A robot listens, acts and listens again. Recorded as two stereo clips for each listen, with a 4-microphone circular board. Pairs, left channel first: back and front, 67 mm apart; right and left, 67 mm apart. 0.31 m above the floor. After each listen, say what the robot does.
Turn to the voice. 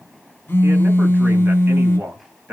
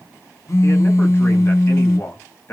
Turn 50° right.
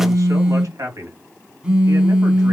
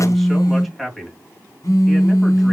Found it: a man speaking, straight ahead, 1 to 2 m away.